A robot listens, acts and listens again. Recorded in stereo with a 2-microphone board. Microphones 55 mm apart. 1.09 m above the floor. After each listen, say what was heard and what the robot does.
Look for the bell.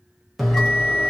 Turn 30° left.
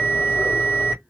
So it is at 150° left. Turn 150° left.
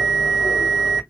The bell is now 10° left. Turn 10° left.
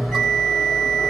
Found it: a bell, straight ahead, 1 to 2 m away.